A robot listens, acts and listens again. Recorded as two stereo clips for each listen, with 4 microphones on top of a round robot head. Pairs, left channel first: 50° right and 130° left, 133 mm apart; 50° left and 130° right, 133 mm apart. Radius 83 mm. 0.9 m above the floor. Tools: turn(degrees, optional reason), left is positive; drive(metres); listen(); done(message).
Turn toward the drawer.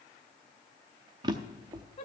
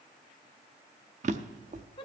turn(degrees=-170, reason="The drawer: 170° right.")
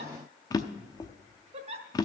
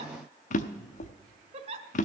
turn(degrees=15, reason="The drawer is now 15° left.")
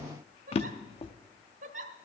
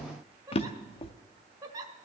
done("Facing the drawer.")